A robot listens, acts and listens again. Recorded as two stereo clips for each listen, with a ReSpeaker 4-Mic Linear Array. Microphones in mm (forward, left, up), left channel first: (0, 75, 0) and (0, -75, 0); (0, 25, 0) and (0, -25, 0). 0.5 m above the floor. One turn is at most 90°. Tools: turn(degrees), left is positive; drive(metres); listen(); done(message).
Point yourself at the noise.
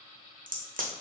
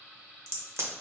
turn(degrees=-65)
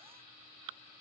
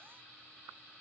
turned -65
listen()
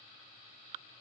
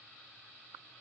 done("I heard a crack, but can't make it out now. It was about straight ahead or 50° right.")